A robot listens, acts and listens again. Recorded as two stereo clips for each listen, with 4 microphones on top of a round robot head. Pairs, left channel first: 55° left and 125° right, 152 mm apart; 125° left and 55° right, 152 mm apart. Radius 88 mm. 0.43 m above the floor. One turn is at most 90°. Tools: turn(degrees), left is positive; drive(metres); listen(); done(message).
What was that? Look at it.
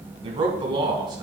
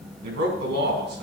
turn(degrees=-60)
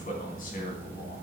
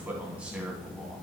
turn(degrees=25)
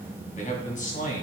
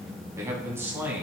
turn(degrees=20)
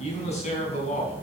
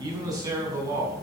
turn(degrees=15)
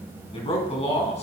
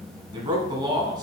turn(degrees=10)
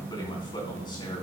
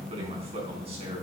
done("Facing the man speaking, 2 to 4 m away.")